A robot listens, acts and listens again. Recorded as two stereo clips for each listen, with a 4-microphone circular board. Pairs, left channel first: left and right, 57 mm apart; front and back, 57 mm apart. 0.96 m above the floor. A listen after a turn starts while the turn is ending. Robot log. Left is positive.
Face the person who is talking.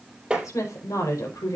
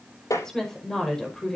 note: The woman speaking: 80° left.
cmd yaw +80
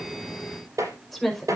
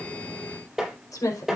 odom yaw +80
end: Found it: a woman speaking, straight ahead.